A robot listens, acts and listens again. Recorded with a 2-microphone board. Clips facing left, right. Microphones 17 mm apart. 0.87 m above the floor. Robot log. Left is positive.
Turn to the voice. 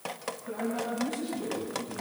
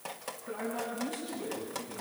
cmd yaw +30
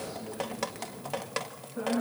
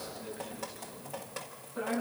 note: So it is at 20° right.
cmd yaw -20
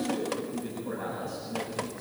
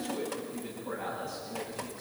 end: Found it: a man speaking, straight ahead.